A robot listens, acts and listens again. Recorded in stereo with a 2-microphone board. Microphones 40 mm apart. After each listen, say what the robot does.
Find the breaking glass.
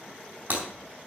Turn 55° right.
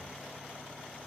Keep listening.
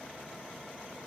I heard breaking glass, but can't make it out now. It was about straight ahead or 70° right.